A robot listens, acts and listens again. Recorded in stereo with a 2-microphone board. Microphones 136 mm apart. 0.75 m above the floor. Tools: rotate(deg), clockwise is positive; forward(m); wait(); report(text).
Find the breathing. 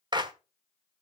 wait()
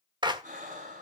rotate(90)
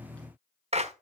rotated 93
wait()
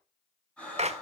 rotate(-10)
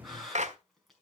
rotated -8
report("Found it: breathing, straight ahead, over 4 m away.")